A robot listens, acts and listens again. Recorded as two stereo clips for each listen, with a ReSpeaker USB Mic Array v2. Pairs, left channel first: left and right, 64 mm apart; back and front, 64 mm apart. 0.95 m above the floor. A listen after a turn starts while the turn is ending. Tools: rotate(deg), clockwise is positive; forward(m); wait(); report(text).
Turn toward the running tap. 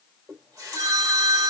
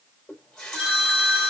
rotate(100)
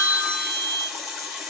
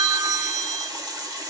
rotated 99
report("Found it: a running tap, straight ahead, 2 to 4 m away.")